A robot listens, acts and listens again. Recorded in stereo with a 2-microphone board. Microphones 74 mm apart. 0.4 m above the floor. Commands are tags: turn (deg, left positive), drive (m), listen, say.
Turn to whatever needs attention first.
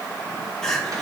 <turn deg="30"/>
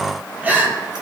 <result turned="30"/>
<turn deg="-20"/>
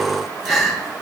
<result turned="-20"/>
<say>Facing the crying.</say>